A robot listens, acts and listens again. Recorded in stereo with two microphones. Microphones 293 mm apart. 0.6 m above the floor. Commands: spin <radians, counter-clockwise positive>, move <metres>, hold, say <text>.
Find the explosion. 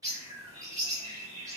hold
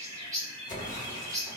spin 0.44
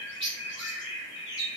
hold
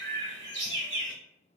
say I heard an explosion, but can't make it out now. It was about straight ahead or 130° left.